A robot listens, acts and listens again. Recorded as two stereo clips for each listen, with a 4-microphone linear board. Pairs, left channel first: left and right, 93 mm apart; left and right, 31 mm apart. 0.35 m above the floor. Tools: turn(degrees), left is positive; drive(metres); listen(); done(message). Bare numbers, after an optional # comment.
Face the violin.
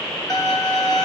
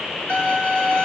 # The violin: about 40° left or 140° left.
turn(40)
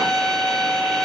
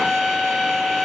done("Facing the violin, 1 to 2 m away.")